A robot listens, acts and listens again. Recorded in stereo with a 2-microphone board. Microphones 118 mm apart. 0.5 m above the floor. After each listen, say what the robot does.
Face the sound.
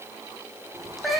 Turn 30° left.
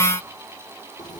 Keep listening.
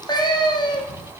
Turn 140° left.
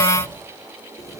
Keep listening.
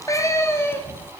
Turn 20° left.
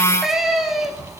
Facing the cat meowing.